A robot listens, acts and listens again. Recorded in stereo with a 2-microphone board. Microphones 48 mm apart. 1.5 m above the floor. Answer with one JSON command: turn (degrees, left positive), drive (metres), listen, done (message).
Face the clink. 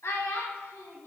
{"listen": true}
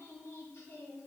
{"listen": true}
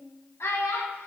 {"done": "I can't make out a clink, only a child speaking."}